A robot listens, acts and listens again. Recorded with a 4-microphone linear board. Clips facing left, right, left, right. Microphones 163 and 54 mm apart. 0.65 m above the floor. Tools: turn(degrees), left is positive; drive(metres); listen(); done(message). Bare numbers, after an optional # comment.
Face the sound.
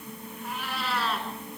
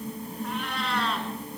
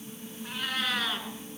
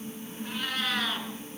turn(30)
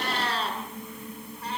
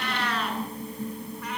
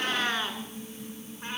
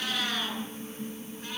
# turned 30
# So it is at 150° left.
turn(150)
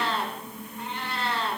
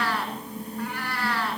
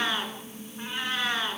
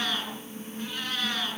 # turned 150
# The cat meowing is now 25° left.
turn(25)
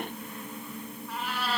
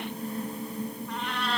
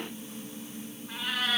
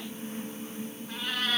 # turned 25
done("Found it: a cat meowing, straight ahead, 2 to 4 m away.")